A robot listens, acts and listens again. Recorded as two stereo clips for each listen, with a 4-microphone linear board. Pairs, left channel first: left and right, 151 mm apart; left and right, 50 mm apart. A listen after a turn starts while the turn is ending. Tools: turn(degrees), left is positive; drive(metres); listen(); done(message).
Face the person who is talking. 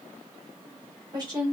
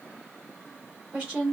turn(degrees=-25)
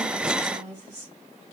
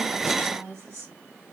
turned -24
turn(degrees=-125)
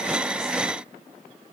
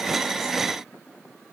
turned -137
turn(degrees=10)
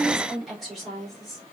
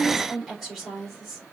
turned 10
done("Found it: a woman speaking, straight ahead.")